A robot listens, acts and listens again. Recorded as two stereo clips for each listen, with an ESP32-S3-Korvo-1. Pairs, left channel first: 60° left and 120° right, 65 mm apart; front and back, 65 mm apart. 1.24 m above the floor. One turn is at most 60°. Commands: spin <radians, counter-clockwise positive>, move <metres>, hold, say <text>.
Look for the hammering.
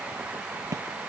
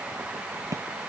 spin -1.05
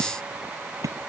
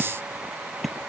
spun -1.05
spin -1.05
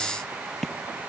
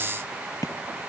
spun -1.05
spin -0.44
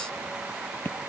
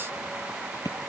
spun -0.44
say Found it: hammering, straight ahead.